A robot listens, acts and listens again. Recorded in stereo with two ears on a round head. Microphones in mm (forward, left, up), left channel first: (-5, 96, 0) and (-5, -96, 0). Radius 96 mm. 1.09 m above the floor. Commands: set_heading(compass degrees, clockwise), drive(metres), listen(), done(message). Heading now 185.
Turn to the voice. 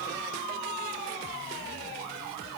listen()
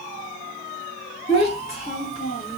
set_heading(155)
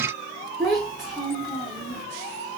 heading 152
done("Facing the child speaking, 1 to 2 m away.")